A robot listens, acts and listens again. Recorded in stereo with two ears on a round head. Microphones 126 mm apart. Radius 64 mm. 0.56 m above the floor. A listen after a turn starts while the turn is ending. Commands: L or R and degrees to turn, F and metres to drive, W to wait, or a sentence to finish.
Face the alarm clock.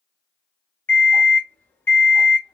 L15
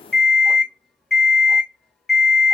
Found it: an alarm clock, straight ahead, under 1 m away.